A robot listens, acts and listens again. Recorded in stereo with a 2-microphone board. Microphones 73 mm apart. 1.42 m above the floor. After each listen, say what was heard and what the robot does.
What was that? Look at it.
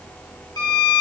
The violin: about 70° left or 110° left. Turn 70° left.
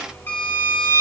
So it is at 35° left. Turn 35° left.
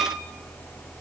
Keep listening.
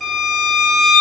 Facing the violin, 1 to 2 m away.